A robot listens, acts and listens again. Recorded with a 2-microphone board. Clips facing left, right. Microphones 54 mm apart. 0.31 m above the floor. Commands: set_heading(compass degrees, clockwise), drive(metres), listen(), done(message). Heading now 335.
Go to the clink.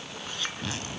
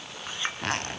set_heading(0)
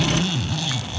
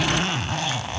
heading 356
listen()
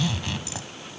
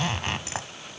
listen()
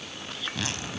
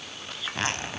drive(1.0)
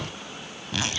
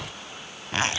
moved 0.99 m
listen()
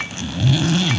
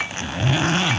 drive(1.0)
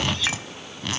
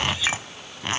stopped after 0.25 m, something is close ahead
set_heading(6)
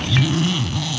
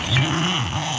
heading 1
listen()
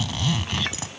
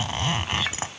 done("Arrived at the clink, straight ahead.")